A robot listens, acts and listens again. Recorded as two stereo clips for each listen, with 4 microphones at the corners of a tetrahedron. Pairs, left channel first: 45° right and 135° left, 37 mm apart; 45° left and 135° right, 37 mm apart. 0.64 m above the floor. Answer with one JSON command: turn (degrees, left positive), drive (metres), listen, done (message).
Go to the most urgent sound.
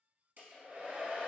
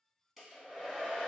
{"listen": true}
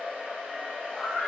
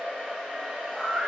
{"turn": -40}
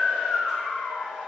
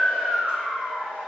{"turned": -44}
{"drive": 1.0}
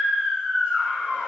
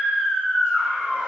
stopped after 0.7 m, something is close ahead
{"turn": 10}
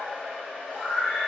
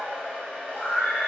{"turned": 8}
{"done": "Arrived at the scream, straight ahead."}